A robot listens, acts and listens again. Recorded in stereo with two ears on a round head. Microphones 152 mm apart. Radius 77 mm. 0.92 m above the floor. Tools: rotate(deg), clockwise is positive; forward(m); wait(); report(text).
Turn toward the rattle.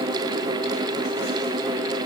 wait()
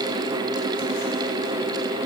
wait()
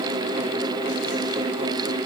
report("I can't make out a rattle to turn to.")